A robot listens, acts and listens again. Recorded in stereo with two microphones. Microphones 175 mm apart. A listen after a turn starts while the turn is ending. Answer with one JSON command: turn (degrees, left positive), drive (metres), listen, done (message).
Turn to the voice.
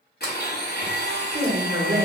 {"turn": -50}
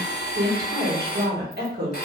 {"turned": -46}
{"turn": -80}
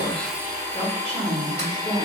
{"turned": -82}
{"done": "Found it: a woman speaking, straight ahead, 1 to 2 m away."}